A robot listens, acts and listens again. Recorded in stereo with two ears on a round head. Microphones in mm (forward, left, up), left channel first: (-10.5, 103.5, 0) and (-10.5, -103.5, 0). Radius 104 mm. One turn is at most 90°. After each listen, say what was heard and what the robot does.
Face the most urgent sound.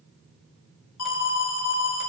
The alarm: about 65° left or 115° left. Turn 65° left.
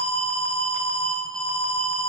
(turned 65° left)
Found it: an alarm, straight ahead.